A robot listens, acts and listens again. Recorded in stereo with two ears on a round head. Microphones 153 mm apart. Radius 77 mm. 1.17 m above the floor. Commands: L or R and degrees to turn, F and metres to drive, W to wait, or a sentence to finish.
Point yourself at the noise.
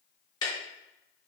L25
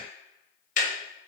L130
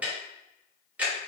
R10
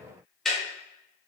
Found it: ticking, straight ahead, under 1 m away.